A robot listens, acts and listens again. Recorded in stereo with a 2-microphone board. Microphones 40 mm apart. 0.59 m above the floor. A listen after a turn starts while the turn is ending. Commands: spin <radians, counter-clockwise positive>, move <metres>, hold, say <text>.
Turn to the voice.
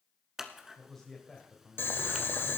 spin 0.52
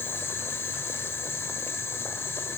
hold
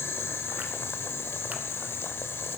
hold
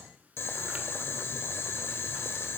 say I heard a man speaking, but can't make it out now. It was about 20° right or 140° left.